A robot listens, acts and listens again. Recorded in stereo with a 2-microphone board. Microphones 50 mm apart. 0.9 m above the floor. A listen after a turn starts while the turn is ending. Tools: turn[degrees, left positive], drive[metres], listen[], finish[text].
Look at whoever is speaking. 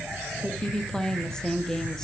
Action: turn[30]
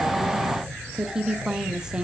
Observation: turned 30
Thought: So it is at 15° right.
Action: turn[-15]
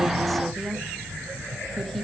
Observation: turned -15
Action: listen[]
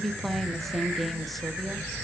Action: finish[Found it: a woman speaking, straight ahead, 1 to 2 m away.]